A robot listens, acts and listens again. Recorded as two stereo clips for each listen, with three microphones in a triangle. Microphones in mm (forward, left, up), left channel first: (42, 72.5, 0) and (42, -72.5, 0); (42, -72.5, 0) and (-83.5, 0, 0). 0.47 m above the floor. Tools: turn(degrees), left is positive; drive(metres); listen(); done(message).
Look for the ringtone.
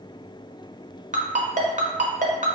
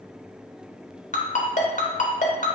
turn(degrees=-60)
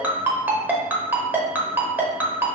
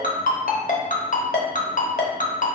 turn(degrees=-15)
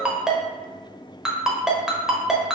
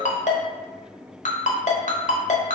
done("Found it: a ringtone, straight ahead, under 1 m away.")